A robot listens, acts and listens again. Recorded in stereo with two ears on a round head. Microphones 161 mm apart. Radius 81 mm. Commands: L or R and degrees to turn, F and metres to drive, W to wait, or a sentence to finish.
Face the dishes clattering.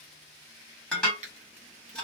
L30
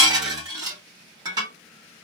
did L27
R25
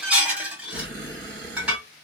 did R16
Facing the dishes clattering, 1 to 2 m away.